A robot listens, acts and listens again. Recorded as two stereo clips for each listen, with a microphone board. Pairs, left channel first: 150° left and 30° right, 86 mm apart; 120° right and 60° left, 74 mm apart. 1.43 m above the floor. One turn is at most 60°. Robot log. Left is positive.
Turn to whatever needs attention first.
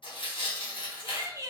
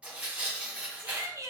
note: The shout: 20° left.
cmd yaw +20
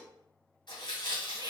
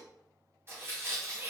cmd idle
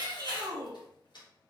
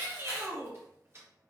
end: Facing the shout.